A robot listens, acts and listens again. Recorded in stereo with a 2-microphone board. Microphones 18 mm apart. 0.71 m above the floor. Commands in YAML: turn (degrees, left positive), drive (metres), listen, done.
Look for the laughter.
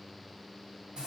listen: true
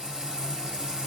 listen: true
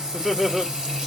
turn: -15
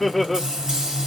done: "Found it: laughter, straight ahead, 1 to 2 m away."